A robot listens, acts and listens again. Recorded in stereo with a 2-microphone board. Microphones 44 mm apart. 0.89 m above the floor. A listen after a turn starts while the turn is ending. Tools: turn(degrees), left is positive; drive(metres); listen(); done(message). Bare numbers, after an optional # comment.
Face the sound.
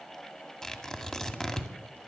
turn(30)
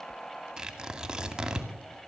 # So it is at 20° right.
turn(-20)
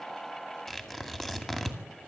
done("Found it: tearing paper, straight ahead, 2 to 4 m away.")